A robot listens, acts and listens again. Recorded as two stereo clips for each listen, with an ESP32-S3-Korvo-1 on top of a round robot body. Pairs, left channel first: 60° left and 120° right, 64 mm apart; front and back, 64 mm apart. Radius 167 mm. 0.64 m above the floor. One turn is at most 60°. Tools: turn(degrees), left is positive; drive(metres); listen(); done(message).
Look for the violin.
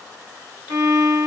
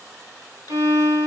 turn(degrees=-60)
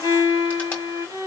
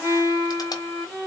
turn(degrees=-60)
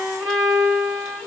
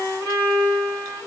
turn(degrees=-60)
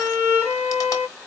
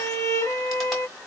done("Facing the violin, 2 to 4 m away.")